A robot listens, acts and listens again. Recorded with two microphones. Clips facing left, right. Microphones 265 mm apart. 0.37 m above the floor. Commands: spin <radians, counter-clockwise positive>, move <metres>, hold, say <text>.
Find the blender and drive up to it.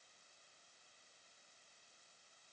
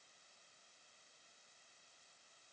hold
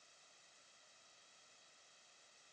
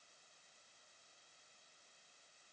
hold
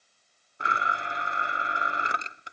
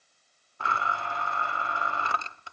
spin 0.35
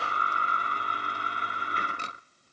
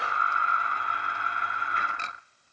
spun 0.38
spin 2.44
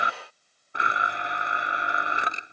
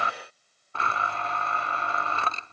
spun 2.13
spin 0.26
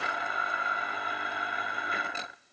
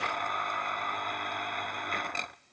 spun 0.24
move 1.0
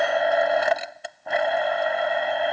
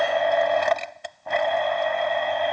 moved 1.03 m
move 1.0
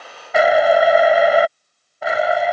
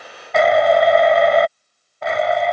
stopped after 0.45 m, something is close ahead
say Arrived at the blender, straight ahead.